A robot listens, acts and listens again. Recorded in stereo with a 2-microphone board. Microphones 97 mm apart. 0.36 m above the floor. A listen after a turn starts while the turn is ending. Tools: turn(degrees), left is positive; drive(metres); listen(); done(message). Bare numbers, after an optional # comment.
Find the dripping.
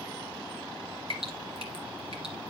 turn(-90)
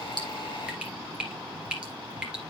# So it is at 10° right.
turn(-10)
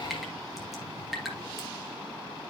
done("Found it: dripping, straight ahead, 2 to 4 m away.")